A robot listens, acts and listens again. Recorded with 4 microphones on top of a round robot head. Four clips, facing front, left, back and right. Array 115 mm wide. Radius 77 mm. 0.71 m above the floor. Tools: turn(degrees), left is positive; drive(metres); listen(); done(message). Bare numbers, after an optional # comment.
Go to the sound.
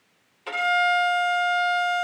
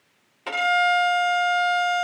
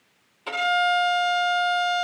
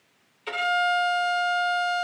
# The violin: 95° left.
turn(95)
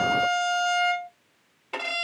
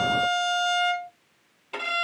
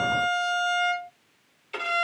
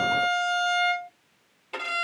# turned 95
drive(1.0)
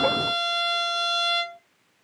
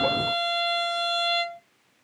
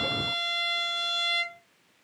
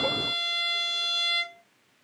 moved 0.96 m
# The violin is now 20° right.
turn(-20)
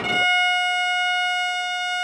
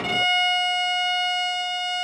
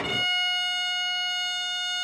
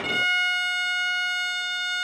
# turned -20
drive(1.0)
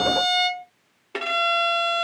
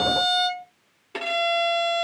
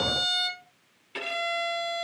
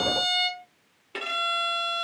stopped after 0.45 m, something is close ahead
# The violin is now 10° left.
turn(10)
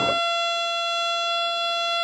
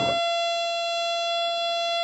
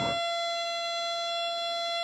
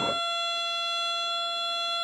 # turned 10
done("I am next to the violin.")